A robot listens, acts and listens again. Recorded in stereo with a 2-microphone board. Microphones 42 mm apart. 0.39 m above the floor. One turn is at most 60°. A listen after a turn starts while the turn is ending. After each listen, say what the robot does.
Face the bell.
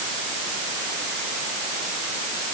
Keep listening.
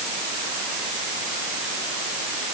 Keep listening.
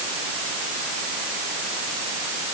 I can't make out a bell to turn to.